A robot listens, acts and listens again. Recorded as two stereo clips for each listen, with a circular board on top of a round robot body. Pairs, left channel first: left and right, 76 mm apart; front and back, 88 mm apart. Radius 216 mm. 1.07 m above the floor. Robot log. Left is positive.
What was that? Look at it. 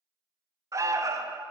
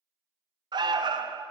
note: The alarm: 140° right.
cmd yaw -140
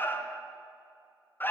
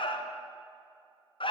note: The alarm is now 25° left.
cmd yaw +25
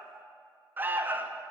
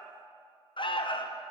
note: The alarm is now 25° right.
cmd yaw -25
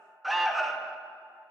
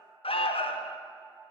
end: Found it: an alarm, straight ahead, under 1 m away.